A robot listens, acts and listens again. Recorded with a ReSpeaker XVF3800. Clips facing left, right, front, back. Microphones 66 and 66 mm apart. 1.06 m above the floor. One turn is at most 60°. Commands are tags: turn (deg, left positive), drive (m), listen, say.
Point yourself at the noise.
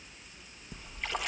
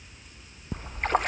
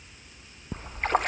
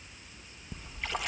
<turn deg="-45"/>
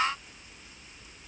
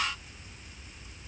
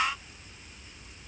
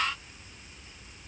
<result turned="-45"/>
<say>Facing where the splash came from. I can't hear it now.</say>